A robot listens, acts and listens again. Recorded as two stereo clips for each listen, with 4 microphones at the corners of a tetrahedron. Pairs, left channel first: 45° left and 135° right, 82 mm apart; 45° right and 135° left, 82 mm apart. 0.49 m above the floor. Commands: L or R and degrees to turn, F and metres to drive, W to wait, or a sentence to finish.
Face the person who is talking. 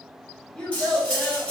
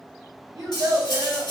L120
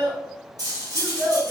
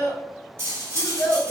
R25
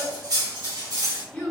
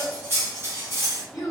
R20
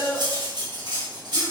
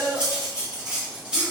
Facing the child speaking.